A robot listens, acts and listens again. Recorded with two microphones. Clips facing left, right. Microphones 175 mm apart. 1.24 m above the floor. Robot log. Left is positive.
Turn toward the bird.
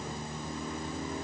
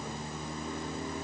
cmd idle
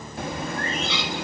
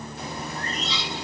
note: The bird: about 65° left or 115° left.
cmd yaw +65
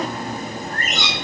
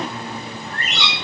note: So it is at 45° left.
cmd yaw +45
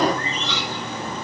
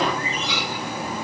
note: The bird is now 10° right.
cmd yaw -10
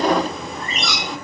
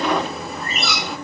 end: Found it: a bird, straight ahead.